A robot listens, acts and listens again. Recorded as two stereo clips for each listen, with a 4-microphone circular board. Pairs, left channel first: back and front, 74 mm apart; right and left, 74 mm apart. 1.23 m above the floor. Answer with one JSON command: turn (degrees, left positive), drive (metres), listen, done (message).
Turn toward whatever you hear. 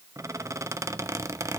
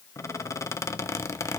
{"turn": -45}
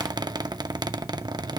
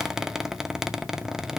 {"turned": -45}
{"done": "Found it: a squeak, straight ahead, under 1 m away."}